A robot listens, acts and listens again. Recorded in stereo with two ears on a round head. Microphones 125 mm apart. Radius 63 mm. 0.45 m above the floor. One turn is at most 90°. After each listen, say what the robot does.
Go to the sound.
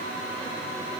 Keep listening.
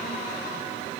Keep listening.
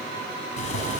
Turn 55° left.
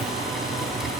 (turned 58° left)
Drive 1.0 m forward.
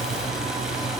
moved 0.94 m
Drive 1.0 m forward.
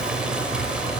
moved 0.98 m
Turn 10° right.
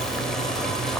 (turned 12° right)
Drive 1.0 m forward.
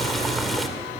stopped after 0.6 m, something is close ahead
I am next to the boiling.